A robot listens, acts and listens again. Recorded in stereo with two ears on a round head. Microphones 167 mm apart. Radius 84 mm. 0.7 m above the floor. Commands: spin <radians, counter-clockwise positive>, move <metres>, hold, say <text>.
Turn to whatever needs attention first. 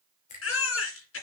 spin 1.57
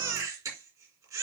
spin -0.26
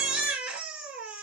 say Found it: a baby crying, straight ahead.